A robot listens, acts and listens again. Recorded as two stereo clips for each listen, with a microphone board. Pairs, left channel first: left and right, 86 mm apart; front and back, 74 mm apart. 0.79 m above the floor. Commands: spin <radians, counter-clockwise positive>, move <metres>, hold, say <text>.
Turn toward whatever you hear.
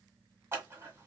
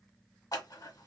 spin -0.52
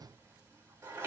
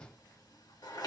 spin -0.44
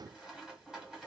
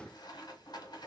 say Facing the scissors, 1 to 2 m away.